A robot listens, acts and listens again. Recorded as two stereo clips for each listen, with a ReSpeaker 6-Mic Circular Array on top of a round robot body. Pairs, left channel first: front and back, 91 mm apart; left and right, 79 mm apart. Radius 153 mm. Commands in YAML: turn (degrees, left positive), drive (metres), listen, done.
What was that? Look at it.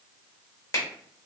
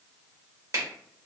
turn: -45
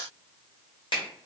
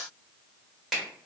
done: "Found it: a finger snap, straight ahead, 1 to 2 m away."